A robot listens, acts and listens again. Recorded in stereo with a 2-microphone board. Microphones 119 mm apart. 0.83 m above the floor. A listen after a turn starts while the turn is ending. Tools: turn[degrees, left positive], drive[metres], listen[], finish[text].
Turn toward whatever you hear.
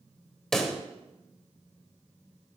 Action: turn[30]
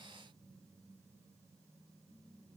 Action: listen[]
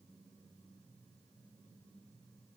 Action: finish[I heard a pop, but can't make it out now. It was about 25° right or 145° left.]